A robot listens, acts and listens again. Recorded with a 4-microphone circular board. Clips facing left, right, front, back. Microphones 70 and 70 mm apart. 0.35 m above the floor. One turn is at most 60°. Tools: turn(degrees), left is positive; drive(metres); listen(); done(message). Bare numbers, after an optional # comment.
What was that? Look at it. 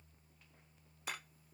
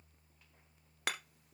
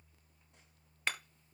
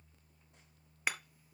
# The hammering: 100° right.
turn(-60)
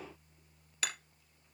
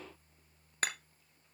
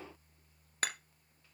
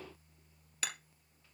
# The hammering is now 40° right.
turn(-40)
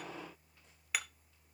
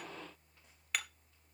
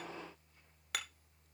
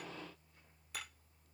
done("Found it: hammering, straight ahead, 1 to 2 m away.")